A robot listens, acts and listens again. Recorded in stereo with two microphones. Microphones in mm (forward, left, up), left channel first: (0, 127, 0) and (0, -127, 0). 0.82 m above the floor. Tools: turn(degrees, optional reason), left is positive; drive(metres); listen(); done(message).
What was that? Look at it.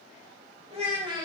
turn(degrees=-15, reason="The child speaking: about 15° right or 165° right.")
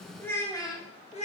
turn(degrees=30, reason="So it is at 30° left.")
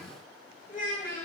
turn(degrees=35, reason="The child speaking is now 35° left.")
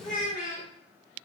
turn(degrees=35, reason="The child speaking is now 35° left.")
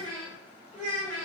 turn(degrees=25, reason="The child speaking is now 25° left.")
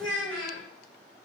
done("Found it: a child speaking, straight ahead.")